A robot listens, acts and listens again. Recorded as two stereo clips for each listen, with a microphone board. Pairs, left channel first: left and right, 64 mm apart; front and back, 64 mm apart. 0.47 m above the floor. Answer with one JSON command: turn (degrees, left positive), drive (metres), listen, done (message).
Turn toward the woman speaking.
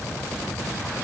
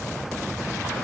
{"listen": true}
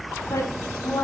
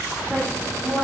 {"turn": 85}
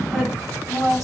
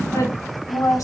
{"done": "Facing the woman speaking."}